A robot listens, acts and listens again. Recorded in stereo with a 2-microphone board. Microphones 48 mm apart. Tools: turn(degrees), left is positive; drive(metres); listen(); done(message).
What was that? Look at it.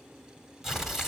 turn(degrees=-30)
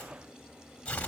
turn(degrees=20)
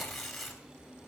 done("Found it: tearing paper, straight ahead.")